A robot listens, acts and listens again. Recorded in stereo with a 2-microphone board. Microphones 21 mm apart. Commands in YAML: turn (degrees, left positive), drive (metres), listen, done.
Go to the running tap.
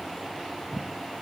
listen: true
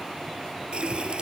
turn: -55
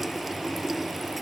drive: 1.0
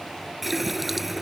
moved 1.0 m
drive: 1.0
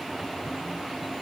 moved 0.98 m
listen: true
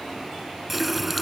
drive: 1.0
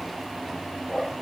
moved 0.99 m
turn: -10
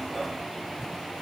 listen: true
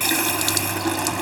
drive: 1.0
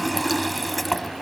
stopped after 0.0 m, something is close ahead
done: "Arrived at the running tap, straight ahead."